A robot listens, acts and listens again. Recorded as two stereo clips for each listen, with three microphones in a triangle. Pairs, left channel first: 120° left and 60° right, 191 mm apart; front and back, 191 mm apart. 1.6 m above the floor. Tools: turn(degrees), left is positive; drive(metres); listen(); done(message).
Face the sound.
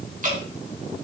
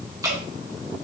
turn(degrees=-110)
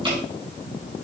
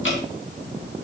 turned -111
done("Facing the dripping, 2 to 4 m away.")